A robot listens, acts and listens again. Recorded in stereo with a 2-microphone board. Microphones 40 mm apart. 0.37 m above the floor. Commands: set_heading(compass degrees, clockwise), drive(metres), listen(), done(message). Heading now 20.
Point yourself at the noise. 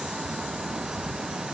listen()
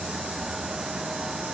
listen()
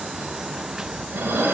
set_heading(75)
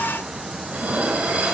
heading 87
set_heading(127)
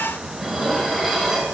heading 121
done("Facing the dishes clattering, 1 to 2 m away.")